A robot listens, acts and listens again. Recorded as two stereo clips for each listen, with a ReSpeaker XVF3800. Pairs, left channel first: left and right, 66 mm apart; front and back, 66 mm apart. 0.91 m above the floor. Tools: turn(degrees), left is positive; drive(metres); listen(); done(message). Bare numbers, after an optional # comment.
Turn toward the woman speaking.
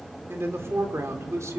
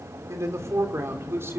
# The woman speaking: 130° right.
turn(-130)
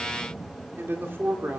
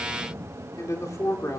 # The woman speaking is now 35° right.
turn(-35)
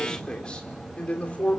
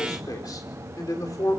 # The woman speaking is now 20° left.
turn(20)
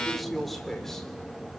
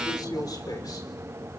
done("Facing the woman speaking, 2 to 4 m away.")